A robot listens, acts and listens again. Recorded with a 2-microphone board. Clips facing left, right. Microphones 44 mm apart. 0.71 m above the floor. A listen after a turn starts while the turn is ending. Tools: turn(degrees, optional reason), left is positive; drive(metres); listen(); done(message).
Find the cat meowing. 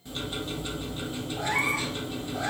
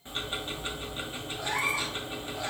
turn(degrees=75, reason="The cat meowing: about 75° left or 105° left.")
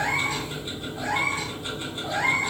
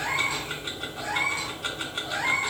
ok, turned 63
turn(degrees=35, reason="So it is at 35° left.")
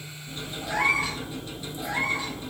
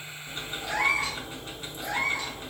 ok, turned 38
done("Found it: a cat meowing, straight ahead, 2 to 4 m away.")